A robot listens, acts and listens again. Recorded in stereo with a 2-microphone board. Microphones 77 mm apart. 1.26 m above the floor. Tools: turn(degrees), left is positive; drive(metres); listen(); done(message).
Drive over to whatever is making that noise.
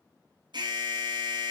turn(degrees=-75)
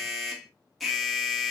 drive(metres=1.0)
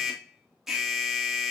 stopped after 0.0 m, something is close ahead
done("Blocked. The alarm is further on, straight ahead.")